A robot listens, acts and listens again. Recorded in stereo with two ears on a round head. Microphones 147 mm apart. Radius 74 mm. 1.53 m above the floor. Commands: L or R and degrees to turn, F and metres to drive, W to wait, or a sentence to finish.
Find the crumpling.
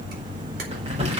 R35
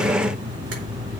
W
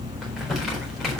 Facing the crumpling.